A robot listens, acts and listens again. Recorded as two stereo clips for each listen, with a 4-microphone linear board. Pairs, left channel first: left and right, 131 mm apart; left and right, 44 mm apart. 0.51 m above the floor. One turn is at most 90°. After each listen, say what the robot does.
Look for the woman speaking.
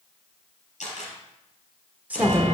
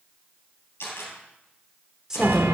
Turn 30° right.
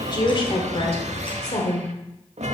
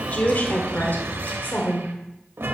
Turn 60° left.
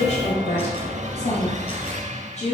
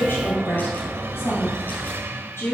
Turn 75° left.
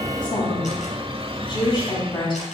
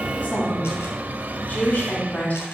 Turn 40° left.
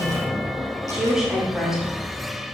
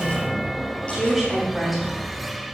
Facing the woman speaking.